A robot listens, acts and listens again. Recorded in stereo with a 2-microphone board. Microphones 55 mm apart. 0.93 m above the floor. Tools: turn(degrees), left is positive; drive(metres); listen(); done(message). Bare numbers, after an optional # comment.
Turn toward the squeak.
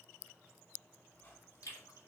# The squeak: about 40° left or 140° left.
turn(40)
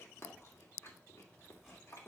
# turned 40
listen()
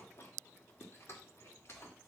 listen()
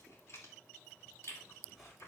done("Facing the squeak.")